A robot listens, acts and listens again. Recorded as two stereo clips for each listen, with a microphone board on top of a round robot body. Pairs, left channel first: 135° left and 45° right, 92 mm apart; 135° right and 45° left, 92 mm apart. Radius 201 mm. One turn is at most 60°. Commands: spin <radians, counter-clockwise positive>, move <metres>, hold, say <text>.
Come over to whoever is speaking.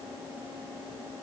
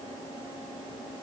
hold
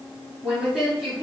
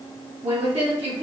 spin 0.70
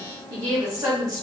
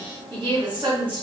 spin 0.17
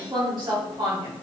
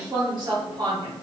move 1.0
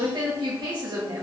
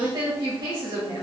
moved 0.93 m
move 1.0
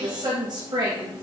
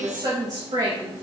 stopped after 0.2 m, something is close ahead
say Arrived at the woman speaking, straight ahead.